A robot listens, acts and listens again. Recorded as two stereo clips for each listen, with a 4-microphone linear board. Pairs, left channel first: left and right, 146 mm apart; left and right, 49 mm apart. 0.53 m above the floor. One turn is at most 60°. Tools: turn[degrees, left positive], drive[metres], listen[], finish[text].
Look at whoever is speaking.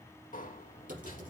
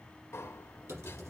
Action: listen[]
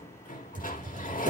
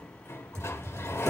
Action: listen[]
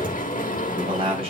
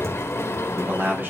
Thought: The man speaking: about 40° right or 140° right.
Action: turn[-40]
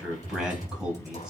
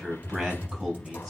Action: finish[Found it: a man speaking, straight ahead, over 4 m away.]